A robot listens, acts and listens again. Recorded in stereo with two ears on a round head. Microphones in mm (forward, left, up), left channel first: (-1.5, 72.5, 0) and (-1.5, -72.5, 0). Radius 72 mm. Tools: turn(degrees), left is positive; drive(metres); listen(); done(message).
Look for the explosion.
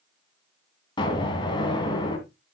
turn(degrees=30)
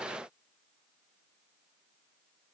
listen()
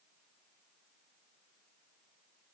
done("I heard an explosion, but can't make it out now. It was about straight ahead or 120° left.")